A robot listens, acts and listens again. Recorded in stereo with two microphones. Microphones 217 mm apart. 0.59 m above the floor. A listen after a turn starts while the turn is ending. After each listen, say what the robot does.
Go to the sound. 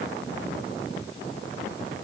Keep listening.
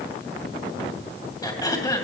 Turn 20° left.
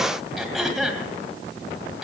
Drive 1.0 m forward.
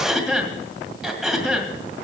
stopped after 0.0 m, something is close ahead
Something is in my way. I am facing the throat clearing but have not reached it.